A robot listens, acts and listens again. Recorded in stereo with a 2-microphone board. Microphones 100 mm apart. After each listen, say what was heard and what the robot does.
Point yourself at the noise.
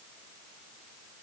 Keep listening.
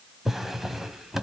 Turn 30° left.
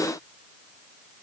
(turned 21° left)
Keep listening.
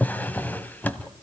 So it is at 165° left. Turn 165° left.
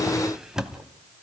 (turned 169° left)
Facing the drawer.